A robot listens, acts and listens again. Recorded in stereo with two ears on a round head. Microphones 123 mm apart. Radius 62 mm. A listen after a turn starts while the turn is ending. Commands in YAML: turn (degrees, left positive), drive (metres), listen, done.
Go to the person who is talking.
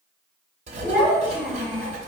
turn: 30
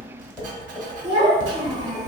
turn: -25
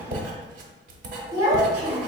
turn: -20
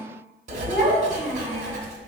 drive: 1.0
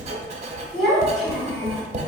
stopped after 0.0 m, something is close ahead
done: "Blocked. The child speaking is further on, straight ahead."